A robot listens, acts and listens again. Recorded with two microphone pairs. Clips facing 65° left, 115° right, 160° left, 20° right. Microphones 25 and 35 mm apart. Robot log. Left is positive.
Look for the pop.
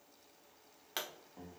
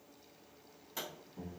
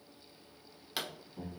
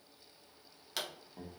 note: The pop: 80° left.
cmd yaw +80
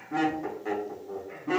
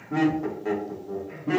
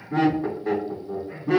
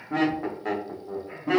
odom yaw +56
note: Nothing new. It was at 25° left.
cmd yaw +25
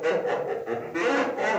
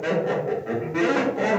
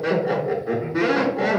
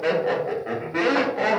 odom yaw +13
note: Nothing new. It was at 15° left.
cmd yaw +15
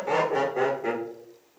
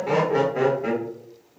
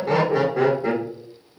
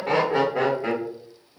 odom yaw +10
end: I heard a pop from this way, but can't make it out now.